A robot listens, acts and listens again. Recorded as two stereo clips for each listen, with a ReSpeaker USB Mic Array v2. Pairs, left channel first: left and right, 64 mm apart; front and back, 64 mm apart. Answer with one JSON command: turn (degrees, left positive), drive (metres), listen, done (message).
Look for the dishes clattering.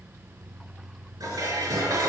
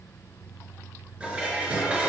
{"turn": -110}
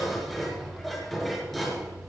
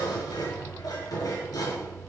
{"done": "Facing the dishes clattering."}